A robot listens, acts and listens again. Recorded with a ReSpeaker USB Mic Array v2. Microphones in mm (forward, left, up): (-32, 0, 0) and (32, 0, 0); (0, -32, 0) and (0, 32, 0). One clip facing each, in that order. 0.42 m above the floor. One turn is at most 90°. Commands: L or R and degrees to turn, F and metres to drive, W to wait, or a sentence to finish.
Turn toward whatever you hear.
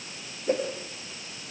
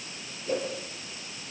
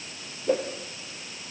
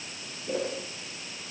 R90
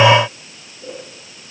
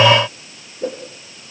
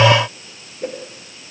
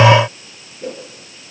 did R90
R30
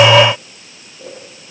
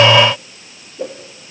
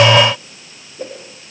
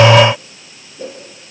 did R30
R25
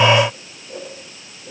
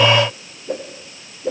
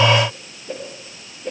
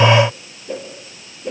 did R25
Found it: a whoosh, straight ahead, over 4 m away.